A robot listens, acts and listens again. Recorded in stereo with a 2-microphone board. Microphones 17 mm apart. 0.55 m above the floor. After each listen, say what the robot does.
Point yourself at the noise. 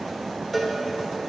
Turn 30° left.
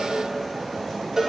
Turn 30° right.
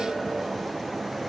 Keep listening.
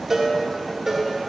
Turn 20° right.
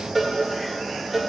Turn 10° right.
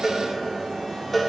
Found it: a cowbell, straight ahead.